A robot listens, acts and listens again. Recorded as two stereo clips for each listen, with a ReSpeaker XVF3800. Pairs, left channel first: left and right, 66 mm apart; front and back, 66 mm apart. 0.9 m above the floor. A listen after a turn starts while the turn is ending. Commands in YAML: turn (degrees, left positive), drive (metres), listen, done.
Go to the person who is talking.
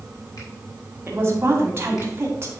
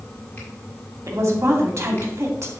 turn: -140
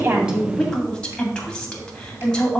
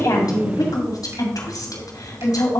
turn: 10
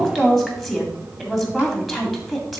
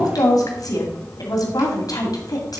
drive: 1.0
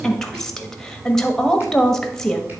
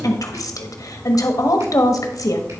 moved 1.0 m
turn: 10
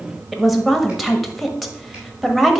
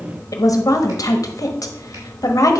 drive: 1.0
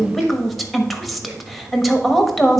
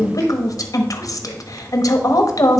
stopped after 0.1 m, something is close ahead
done: "I am next to the woman speaking."